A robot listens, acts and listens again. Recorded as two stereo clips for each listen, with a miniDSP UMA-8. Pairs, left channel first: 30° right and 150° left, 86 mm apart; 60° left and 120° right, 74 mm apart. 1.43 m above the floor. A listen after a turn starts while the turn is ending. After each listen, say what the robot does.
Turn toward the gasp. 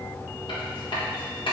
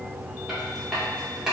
Keep listening.
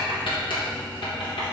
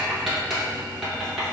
Keep listening.
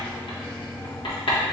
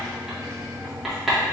I can't make out a gasp, only writing.